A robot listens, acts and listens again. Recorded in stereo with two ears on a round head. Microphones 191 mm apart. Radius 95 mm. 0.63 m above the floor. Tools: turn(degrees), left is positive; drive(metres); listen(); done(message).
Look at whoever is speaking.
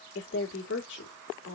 turn(degrees=60)
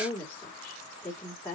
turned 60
turn(degrees=10)
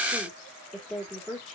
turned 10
done("Found it: a woman speaking, straight ahead.")